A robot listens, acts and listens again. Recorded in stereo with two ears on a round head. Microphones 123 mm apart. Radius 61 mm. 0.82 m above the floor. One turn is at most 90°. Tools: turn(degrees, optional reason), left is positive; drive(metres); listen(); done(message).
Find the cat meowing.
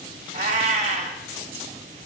turn(degrees=-45, reason="The cat meowing: about 45° right or 135° right.")
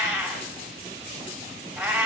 turn(degrees=-10, reason="So it is at 10° right.")
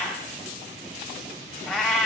done("Facing the cat meowing.")